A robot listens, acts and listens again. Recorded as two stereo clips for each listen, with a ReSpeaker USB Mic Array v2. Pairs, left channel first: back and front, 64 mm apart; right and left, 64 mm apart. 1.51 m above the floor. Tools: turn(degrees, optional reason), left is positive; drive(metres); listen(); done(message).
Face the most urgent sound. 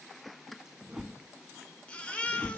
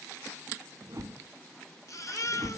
turn(degrees=-110, reason="The baby crying: 110° right.")
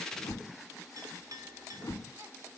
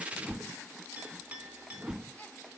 listen()
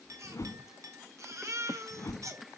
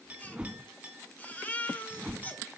turn(degrees=-30, reason="The baby crying is now 30° right.")
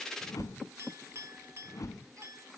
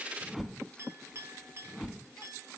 listen()
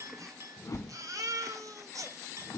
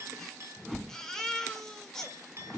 turn(degrees=-10, reason="The baby crying is now 10° right.")
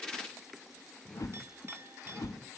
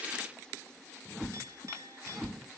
listen()
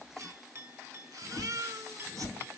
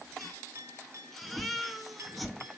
done("Found it: a baby crying, straight ahead.")